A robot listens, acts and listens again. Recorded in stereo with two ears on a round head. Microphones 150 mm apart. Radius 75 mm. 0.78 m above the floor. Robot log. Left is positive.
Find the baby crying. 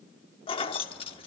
cmd idle
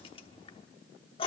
cmd idle
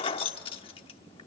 end: I can't make out a baby crying, only keys jangling.